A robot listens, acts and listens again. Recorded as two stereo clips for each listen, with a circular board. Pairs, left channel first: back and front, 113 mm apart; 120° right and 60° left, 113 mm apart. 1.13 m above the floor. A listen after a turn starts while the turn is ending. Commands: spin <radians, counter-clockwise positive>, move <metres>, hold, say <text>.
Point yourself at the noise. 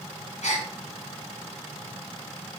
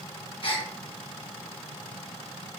spin -2.88
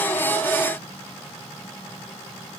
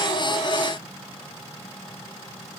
say Facing where the gasp came from. I can't hear it now.